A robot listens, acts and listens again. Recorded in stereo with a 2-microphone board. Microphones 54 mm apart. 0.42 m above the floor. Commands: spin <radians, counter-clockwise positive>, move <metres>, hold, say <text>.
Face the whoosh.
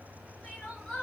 hold
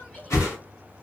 spin 1.22
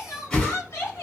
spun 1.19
spin 0.26
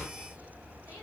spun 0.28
hold
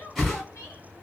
say Found it: a whoosh, straight ahead, 1 to 2 m away.